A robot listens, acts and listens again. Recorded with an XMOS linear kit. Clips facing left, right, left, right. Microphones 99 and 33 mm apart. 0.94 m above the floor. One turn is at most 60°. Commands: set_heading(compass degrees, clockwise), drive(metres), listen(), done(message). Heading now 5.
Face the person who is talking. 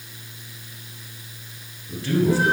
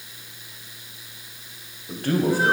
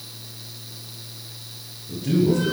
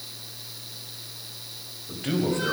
set_heading(60)
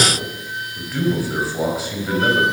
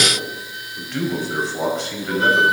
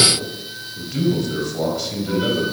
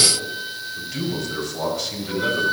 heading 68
done("Found it: a man speaking, straight ahead, over 4 m away.")